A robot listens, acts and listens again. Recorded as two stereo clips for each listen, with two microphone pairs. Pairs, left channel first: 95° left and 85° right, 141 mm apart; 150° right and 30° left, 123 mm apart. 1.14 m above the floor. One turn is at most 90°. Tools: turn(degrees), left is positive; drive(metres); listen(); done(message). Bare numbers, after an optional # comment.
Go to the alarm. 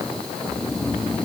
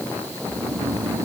listen()
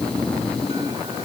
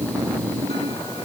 listen()
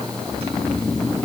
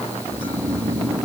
done("I can't make out an alarm, only snoring.")